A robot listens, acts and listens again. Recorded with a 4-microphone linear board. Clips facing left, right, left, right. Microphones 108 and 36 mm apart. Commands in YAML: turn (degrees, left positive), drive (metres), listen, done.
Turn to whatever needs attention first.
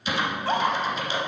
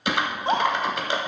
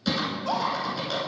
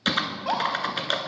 turn: -20
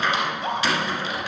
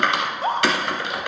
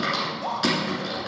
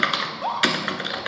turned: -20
turn: -135
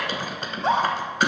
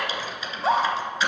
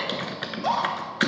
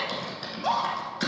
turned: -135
done: "Found it: a scream, straight ahead."